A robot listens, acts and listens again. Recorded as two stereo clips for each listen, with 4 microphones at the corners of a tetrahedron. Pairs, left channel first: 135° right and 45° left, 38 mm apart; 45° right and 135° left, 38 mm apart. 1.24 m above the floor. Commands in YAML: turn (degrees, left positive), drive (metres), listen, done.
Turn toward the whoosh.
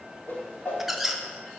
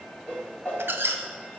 turn: -95
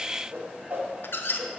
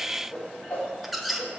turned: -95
done: "Facing the whoosh."